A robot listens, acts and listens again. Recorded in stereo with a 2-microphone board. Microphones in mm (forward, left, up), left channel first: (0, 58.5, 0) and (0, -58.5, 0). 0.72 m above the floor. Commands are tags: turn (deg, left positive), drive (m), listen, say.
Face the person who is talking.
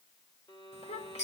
<turn deg="60"/>
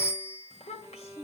<turn deg="55"/>
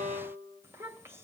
<turn deg="-20"/>
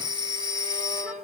<listen/>
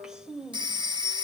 <say>Facing the child speaking.</say>